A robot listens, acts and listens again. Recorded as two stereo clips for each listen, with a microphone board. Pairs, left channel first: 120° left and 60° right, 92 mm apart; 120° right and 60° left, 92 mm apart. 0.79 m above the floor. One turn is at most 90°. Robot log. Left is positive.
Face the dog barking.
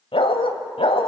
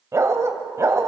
note: The dog barking: 120° left.
cmd yaw +90
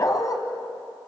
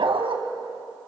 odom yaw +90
note: The dog barking is now 70° left.
cmd yaw +70
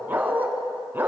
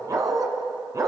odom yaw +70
note: The dog barking is now 10° left.
cmd yaw +10
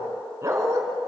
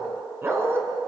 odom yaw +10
end: Found it: a dog barking, straight ahead, 2 to 4 m away.